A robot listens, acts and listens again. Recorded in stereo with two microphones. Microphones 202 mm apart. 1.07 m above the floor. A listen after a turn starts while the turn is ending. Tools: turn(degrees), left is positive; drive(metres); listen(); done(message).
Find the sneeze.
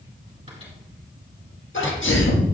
turn(degrees=90)
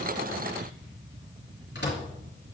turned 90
done("I heard a sneeze from this way, but can't make it out now.")